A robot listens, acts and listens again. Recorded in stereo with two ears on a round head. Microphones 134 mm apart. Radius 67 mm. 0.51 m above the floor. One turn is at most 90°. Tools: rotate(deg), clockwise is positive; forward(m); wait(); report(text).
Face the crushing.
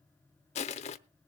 rotate(-45)
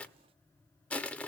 rotate(-10)
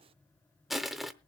report("Found it: crushing, straight ahead, under 1 m away.")